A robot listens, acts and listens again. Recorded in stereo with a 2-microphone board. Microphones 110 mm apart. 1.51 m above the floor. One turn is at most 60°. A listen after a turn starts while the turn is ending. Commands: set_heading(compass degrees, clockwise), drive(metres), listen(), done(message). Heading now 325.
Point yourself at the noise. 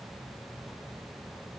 listen()
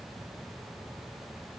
listen()
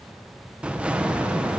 set_heading(355)
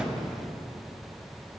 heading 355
listen()
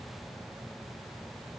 done("I heard an explosion, but can't make it out now. It was about 20° left or 140° right.")